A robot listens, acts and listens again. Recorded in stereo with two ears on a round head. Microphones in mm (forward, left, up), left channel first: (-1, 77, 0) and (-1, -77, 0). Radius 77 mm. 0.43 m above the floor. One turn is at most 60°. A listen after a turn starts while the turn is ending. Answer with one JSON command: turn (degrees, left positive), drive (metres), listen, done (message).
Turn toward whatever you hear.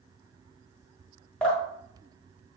{"turn": 30}
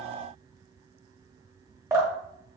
{"turn": -20}
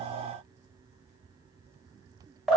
{"done": "Facing the dripping, 1 to 2 m away."}